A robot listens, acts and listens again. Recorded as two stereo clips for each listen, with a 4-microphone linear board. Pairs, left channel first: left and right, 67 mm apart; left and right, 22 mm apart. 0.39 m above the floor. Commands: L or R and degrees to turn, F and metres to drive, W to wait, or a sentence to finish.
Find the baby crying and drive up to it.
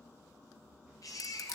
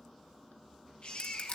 L55
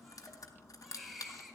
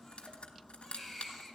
F1.0
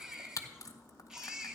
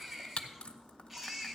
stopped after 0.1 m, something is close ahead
R15
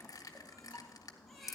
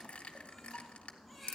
Something is in my way. I am facing the baby crying but have not reached it.